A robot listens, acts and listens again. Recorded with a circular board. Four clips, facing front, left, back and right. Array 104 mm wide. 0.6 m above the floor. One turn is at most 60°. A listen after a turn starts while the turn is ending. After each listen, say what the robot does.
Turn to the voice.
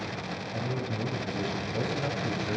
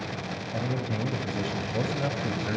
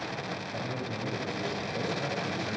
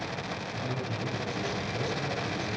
Turn 60° left.
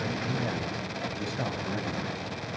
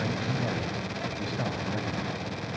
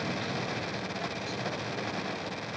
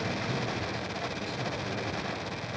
Turn 40° left.
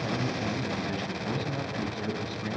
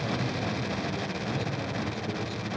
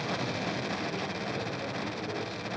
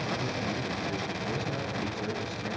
Keep listening.
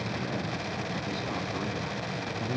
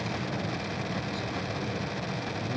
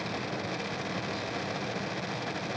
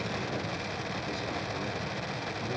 Keep listening.
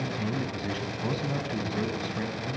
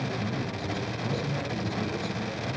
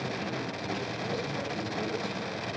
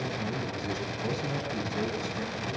Turn 10° right.
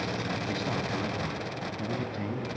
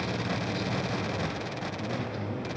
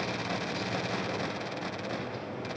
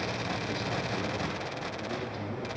Found it: a man speaking, straight ahead.